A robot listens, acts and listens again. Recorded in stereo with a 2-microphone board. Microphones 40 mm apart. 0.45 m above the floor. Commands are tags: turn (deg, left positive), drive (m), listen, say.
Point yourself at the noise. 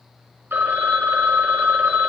<turn deg="-65"/>
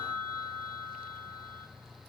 <turn deg="-10"/>
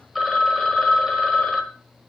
<say>Found it: a phone ringing, straight ahead.</say>